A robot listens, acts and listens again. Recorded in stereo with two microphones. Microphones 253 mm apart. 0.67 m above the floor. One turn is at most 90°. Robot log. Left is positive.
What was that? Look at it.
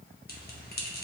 note: The bell: about 35° left or 145° left.
cmd yaw +35
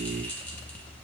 end: Found it: a bell, straight ahead, under 1 m away.